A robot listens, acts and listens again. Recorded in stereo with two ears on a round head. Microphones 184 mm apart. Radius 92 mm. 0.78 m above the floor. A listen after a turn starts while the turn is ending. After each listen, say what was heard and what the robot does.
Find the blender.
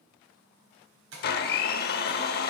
The blender: about 50° left or 130° left. Turn 50° left.
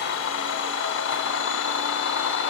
So it is at 75° left. Turn 75° left.
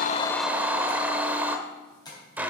The blender is now 10° right. Turn 10° right.
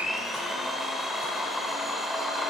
Found it: a blender, straight ahead, under 1 m away.